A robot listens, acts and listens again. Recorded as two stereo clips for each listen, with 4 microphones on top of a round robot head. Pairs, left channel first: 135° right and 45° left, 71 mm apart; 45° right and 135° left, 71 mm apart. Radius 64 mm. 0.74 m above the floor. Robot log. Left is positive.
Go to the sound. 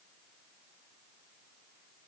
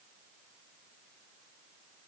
cmd idle
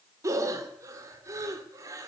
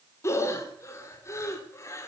cmd fwd 1.0
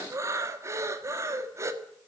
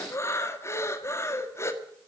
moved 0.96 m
cmd fwd 1.0
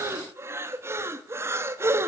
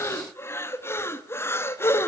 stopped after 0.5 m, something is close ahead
end: I am next to the breathing.